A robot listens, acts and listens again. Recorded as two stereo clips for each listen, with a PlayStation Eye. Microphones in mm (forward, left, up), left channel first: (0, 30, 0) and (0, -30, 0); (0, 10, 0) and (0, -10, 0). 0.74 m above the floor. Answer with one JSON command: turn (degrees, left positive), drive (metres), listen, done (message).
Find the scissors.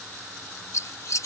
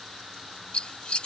{"turn": 60}
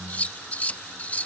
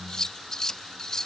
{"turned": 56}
{"turn": 30}
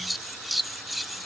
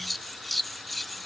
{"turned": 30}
{"done": "Facing the scissors."}